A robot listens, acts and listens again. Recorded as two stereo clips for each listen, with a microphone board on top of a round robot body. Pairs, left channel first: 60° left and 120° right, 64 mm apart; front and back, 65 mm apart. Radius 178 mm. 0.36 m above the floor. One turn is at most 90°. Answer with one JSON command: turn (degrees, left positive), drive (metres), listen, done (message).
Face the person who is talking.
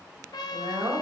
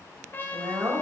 {"turn": -90}
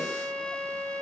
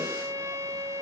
{"turn": -35}
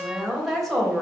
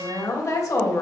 {"turn": -25}
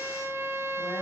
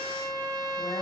{"listen": true}
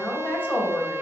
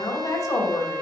{"done": "Found it: a woman speaking, straight ahead."}